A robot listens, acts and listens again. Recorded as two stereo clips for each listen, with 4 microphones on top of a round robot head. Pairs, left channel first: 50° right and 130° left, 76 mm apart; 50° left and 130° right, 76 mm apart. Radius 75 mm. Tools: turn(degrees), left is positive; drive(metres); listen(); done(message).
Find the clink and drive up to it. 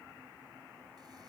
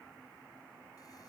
listen()
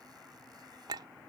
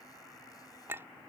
turn(degrees=165)
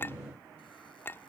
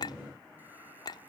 turn(degrees=10)
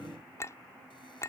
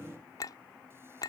drive(metres=1.0)
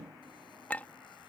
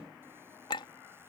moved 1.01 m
turn(degrees=20)
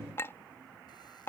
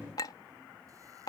turn(degrees=10)
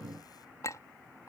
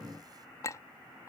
drive(metres=1.0)
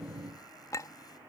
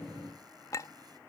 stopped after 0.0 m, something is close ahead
done("Arrived at the clink, straight ahead.")